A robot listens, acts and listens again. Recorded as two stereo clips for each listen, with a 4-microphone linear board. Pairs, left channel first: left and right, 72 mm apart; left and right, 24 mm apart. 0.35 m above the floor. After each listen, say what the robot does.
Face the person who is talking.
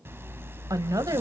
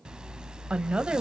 Turn 55° right.
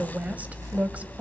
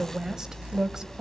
Turn 25° right.
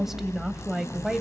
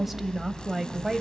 Facing the woman speaking.